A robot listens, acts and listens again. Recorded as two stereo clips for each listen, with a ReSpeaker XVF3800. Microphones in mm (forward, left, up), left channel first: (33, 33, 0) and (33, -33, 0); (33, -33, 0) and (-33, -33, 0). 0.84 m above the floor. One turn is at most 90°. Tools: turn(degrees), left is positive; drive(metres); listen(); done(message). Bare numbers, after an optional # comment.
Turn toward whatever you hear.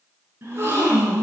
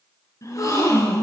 # The gasp: 35° right.
turn(-35)
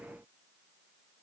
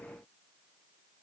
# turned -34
done("Facing where the gasp came from. I can't hear it now.")